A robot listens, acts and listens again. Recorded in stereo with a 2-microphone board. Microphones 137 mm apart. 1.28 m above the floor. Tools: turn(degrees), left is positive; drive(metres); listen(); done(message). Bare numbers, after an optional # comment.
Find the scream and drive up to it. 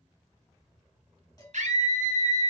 # The scream: about 65° right or 115° right.
turn(-65)
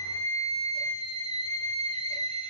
# So it is at 50° right.
turn(-50)
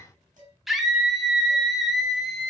drive(1.0)
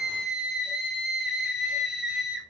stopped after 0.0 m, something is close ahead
done("Something is in my way. I am facing the scream but have not reached it.")